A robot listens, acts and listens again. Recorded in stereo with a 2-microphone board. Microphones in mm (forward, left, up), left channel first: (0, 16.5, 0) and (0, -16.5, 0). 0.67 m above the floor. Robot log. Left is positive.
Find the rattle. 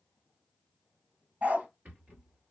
note: The rattle: about 55° right or 125° right.
cmd yaw -55
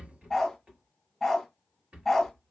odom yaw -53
note: So it is at 55° right.
cmd yaw -55
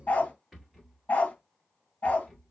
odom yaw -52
end: Found it: a rattle, straight ahead, 2 to 4 m away.